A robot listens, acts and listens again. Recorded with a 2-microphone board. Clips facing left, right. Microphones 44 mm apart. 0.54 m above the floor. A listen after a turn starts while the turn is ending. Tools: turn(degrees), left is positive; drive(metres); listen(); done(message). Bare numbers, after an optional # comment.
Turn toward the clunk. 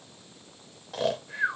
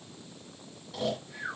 listen()
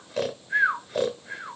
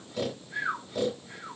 listen()
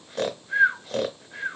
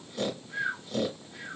done("I can't make out a clunk to turn to.")